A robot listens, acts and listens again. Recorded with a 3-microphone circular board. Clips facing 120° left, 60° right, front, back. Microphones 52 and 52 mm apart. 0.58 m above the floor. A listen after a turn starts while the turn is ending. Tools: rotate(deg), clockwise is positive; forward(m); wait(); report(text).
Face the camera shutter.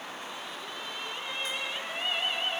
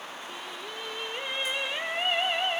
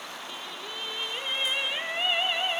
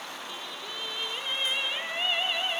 wait()
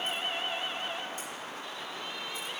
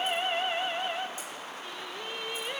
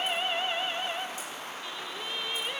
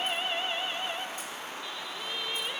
wait()
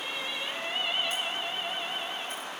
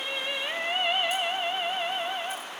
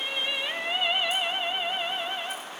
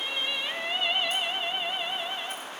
report("I can't make out a camera shutter, only singing.")